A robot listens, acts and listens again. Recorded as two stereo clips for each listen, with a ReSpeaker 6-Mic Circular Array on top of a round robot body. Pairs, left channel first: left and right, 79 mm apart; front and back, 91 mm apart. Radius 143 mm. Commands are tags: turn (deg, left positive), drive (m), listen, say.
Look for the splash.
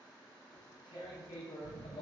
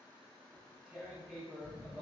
<listen/>
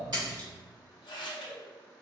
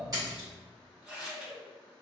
<turn deg="-130"/>
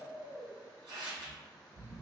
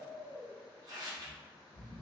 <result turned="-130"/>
<say>I heard a splash from this way, but can't make it out now.</say>